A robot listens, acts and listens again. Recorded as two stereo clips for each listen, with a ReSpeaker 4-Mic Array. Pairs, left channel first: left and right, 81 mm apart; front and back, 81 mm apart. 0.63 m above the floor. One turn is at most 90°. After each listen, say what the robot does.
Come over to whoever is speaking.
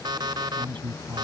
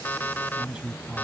Turn 90° right.
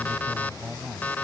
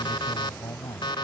Turn 15° right.
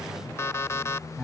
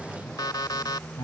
Drive 1.0 m forward.
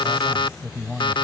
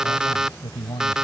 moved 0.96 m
Drive 1.0 m forward.
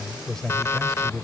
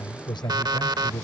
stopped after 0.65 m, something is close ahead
Something is in my way. I am facing the man speaking but have not reached it.